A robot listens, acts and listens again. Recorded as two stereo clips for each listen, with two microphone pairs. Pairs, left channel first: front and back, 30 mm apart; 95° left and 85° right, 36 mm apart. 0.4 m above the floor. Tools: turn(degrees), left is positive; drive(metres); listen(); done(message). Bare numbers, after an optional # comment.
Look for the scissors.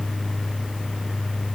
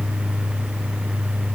listen()
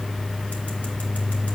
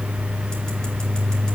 listen()
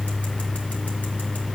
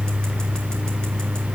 done("I can't make out scissors.")